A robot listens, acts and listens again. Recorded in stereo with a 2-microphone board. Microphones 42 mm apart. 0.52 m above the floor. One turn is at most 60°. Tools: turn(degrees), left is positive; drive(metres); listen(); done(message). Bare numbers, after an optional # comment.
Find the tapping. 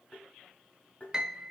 # The tapping: about 30° left or 150° left.
turn(30)
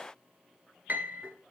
listen()
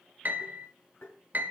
# So it is at 120° left.
turn(60)
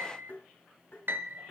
# The tapping is now 55° left.
turn(55)
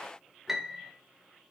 listen()
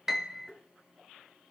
done("Found it: tapping, straight ahead.")